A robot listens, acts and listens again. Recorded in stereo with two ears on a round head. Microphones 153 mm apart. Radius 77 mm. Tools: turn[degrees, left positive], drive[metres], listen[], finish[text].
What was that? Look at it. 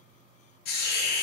Thought: The hiss: about 65° left or 115° left.
Action: turn[65]
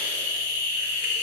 Thought: So it is at 50° left.
Action: turn[50]
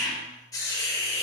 Thought: The hiss is now 20° left.
Action: turn[20]
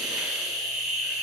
Action: finish[Found it: a hiss, straight ahead.]